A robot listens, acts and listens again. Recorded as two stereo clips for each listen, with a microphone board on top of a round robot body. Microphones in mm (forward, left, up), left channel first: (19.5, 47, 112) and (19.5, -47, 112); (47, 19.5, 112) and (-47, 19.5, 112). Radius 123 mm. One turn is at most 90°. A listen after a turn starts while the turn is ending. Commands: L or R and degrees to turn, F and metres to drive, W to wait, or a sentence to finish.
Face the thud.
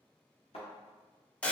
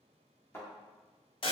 L65
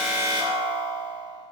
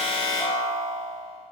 Facing where the thud came from. I can't hear it now.